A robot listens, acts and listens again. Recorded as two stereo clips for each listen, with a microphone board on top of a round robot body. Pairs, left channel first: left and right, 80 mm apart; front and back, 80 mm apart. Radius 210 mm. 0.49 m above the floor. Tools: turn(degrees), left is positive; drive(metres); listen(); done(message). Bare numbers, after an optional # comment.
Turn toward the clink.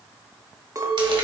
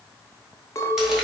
# The clink: 50° right.
turn(-50)
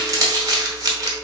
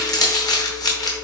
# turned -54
listen()
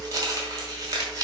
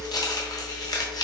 listen()
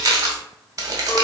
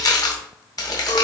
done("I heard a clink from this way, but can't make it out now.")